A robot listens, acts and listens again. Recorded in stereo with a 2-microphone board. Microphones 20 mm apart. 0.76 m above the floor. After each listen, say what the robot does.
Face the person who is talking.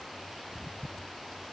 Keep listening.
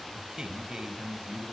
Turn 40° right.
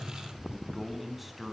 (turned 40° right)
Facing the man speaking.